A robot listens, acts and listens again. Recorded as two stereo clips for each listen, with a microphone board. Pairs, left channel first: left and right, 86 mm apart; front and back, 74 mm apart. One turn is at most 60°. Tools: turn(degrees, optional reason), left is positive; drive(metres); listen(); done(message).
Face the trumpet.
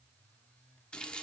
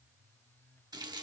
listen()
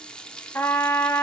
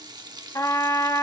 turn(degrees=30, reason="The trumpet: 30° left.")
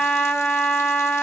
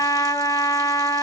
turn(degrees=10, reason="The trumpet is now 10° left.")
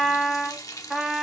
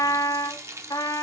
done("Facing the trumpet, 1 to 2 m away.")